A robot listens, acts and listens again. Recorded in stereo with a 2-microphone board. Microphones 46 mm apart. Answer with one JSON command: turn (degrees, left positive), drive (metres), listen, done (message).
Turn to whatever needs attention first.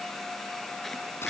{"listen": true}
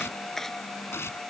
{"listen": true}
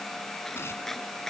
{"done": "I can't make out anything urgent to turn to."}